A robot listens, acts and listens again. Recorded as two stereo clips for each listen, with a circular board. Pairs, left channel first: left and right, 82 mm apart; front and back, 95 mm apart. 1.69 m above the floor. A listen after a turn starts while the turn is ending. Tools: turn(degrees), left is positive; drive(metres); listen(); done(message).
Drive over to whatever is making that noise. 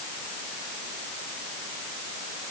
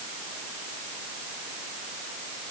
listen()
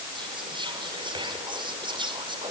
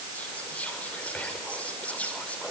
turn(degrees=-75)
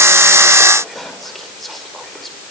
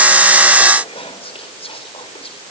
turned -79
drive(metres=1.0)
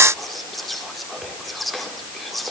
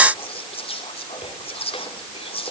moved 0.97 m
drive(metres=1.0)
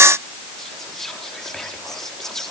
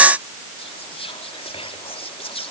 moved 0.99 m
drive(metres=1.0)
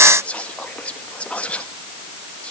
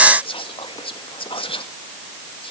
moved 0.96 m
turn(degrees=15)
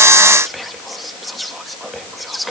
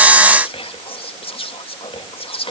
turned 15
drive(metres=1.0)
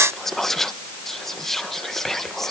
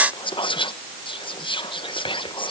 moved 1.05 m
drive(metres=1.0)
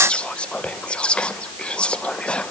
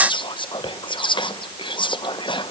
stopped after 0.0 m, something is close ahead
turn(degrees=15)
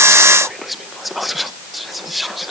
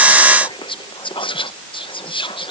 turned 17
done("I am next to the whispering.")